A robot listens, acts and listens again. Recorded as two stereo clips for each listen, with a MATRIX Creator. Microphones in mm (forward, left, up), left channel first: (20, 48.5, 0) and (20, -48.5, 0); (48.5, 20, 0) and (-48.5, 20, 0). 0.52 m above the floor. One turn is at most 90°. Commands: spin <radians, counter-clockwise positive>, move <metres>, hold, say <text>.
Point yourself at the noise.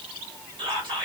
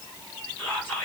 spin -1.22
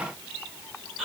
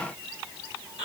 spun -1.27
say Found it: whispering, straight ahead, 1 to 2 m away.